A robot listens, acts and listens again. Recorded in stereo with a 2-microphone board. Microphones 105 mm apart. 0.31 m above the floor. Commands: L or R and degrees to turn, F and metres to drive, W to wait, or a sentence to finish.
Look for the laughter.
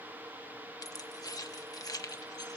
W
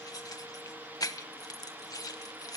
W
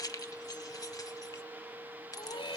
L55
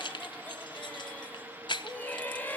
L20
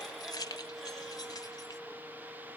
W
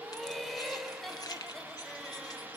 Found it: laughter, straight ahead.